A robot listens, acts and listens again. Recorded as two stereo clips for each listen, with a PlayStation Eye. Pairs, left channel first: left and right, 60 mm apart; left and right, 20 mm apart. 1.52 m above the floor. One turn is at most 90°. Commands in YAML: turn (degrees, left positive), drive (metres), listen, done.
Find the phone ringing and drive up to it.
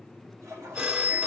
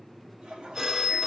turn: -20
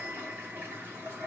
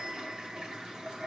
listen: true
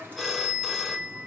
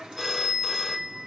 drive: 1.0
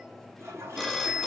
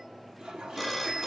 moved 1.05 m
drive: 1.0
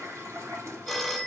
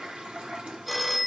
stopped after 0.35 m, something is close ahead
done: "Arrived at the phone ringing, straight ahead."